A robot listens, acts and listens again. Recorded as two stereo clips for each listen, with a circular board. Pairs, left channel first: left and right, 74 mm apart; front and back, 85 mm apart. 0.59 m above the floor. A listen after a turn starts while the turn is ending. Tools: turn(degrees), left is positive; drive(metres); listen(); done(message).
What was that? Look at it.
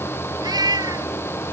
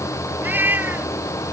turn(degrees=-115)
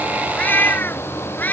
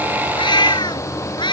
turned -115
turn(degrees=25)
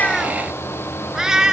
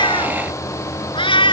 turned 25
turn(degrees=-10)
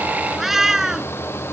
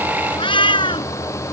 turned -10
done("Facing the cat meowing.")